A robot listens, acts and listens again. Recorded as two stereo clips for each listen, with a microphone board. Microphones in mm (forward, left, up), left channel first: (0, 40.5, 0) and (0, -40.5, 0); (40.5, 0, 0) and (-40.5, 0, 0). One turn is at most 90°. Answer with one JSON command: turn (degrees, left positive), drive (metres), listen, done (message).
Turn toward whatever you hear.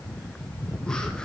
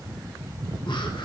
{"turn": 10}
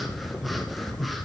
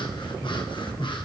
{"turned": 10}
{"done": "Found it: breathing, straight ahead."}